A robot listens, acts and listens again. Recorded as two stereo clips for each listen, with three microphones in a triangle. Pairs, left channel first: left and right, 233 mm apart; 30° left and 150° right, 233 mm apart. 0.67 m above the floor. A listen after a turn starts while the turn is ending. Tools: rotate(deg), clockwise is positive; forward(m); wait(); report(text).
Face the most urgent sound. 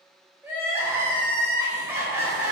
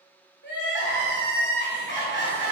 rotate(10)
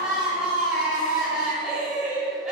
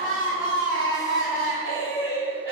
report("Found it: crying, straight ahead.")